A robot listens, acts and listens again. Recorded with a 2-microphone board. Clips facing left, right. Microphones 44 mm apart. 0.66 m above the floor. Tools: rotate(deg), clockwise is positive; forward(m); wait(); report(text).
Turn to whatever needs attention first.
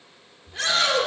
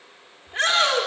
rotate(40)
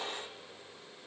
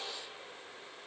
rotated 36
wait()
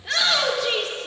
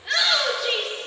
report("Facing the shout.")